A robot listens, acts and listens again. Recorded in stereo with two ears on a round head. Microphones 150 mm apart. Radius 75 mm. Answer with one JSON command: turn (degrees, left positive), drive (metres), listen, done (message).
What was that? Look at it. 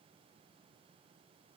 {"listen": true}
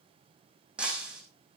{"turn": -30}
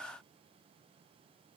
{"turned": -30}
{"listen": true}
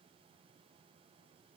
{"done": "I heard breaking glass, but can't make it out now. It was about 25° left or 145° right."}